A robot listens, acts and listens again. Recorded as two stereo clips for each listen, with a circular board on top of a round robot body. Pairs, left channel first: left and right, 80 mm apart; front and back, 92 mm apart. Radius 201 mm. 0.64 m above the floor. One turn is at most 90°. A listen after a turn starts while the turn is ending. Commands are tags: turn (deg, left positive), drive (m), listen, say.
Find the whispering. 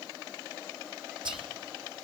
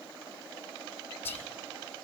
<turn deg="-65"/>
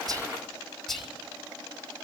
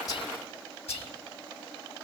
<say>Found it: whispering, straight ahead, 2 to 4 m away.</say>